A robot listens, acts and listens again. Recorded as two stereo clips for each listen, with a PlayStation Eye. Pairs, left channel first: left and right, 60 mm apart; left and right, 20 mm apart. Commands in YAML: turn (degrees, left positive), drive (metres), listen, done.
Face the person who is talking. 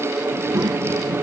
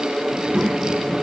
turn: -90
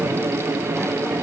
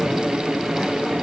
listen: true
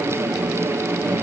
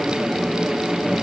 turn: 25
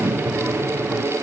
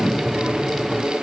done: "Found it: a child speaking, straight ahead, 2 to 4 m away."